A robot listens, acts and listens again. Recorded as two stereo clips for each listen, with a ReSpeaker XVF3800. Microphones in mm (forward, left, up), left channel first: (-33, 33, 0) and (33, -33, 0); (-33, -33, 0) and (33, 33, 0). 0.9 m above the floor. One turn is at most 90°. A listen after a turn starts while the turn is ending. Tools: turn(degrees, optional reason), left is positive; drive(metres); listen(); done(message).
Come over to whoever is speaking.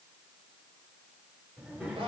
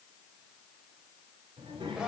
turn(degrees=25, reason="The child speaking: 25° left.")
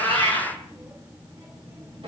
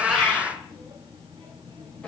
turn(degrees=10, reason="The child speaking is now 10° left.")
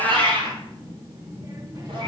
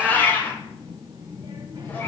drive(metres=1.0)
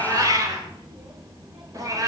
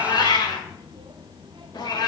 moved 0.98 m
drive(metres=1.0)
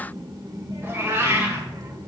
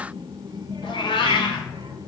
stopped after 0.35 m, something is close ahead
done("I am next to the child speaking.")